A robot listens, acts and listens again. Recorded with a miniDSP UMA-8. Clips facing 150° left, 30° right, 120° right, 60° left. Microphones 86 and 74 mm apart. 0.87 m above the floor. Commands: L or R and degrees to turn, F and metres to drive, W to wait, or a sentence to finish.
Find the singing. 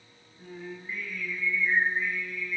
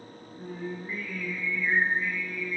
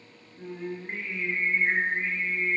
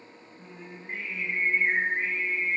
R70
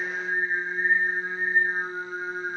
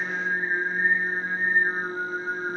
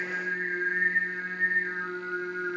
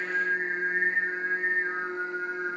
L20
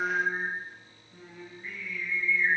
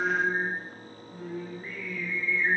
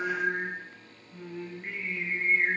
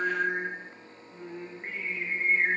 L10
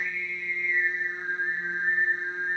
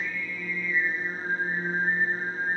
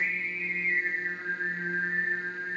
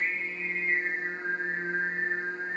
Found it: singing, straight ahead.